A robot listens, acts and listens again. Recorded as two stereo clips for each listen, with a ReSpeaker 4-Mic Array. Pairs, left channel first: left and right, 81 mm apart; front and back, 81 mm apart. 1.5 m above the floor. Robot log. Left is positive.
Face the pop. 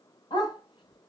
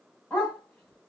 cmd idle
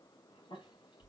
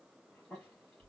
cmd idle
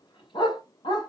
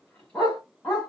end: I can't make out a pop to turn to.